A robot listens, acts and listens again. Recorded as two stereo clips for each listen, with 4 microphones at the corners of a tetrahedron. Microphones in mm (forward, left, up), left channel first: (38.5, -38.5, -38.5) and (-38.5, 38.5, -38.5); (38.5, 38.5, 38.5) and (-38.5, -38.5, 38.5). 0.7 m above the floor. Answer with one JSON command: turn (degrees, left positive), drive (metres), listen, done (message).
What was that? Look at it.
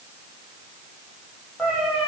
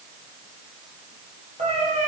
{"turn": -135}
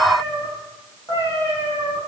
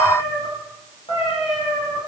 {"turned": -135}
{"turn": 15}
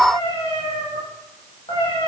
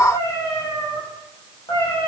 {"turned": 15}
{"done": "Found it: a cat meowing, straight ahead, over 4 m away."}